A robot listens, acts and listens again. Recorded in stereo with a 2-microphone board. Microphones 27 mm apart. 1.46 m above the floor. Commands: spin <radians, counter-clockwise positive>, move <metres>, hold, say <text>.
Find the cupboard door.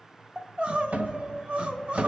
spin -1.57
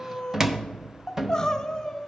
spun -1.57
spin -0.35
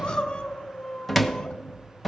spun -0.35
say Found it: a cupboard door, straight ahead.